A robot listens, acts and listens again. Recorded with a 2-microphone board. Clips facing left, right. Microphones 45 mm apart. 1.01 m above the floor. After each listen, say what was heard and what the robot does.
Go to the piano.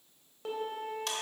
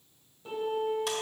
Turn 90° left.
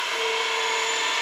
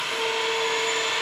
Keep listening.
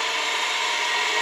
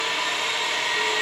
Keep listening.
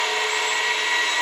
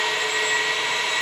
I heard a piano from this way, but can't make it out now. I did not reach it.